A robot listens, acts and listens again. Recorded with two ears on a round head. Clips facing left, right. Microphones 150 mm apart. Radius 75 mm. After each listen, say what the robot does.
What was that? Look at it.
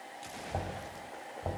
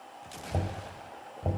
Turn 30° right.
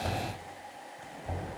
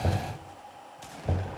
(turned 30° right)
Turn 120° right.
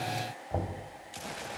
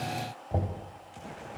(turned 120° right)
Turn 15° right.
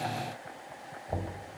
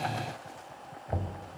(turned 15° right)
Facing the knocking.